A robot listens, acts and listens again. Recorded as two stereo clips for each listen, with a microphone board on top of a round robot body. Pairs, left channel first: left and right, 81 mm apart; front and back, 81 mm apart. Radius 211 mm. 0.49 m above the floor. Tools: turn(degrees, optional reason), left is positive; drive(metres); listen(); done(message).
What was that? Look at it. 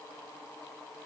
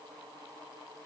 listen()
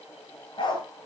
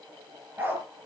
turn(degrees=115, reason="The dog barking: 115° left.")
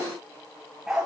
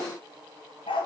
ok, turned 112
turn(degrees=-10, reason="The dog barking is now 10° right.")
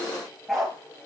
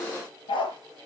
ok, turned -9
done("Found it: a dog barking, straight ahead, over 4 m away.")